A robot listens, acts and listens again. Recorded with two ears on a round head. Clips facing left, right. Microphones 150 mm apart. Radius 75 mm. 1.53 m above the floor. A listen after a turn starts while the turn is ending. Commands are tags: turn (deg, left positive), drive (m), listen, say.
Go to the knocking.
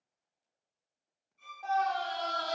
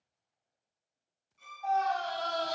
<listen/>
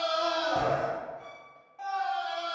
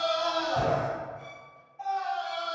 <listen/>
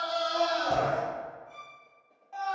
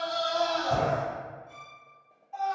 <say>I can't make out knocking to turn to.</say>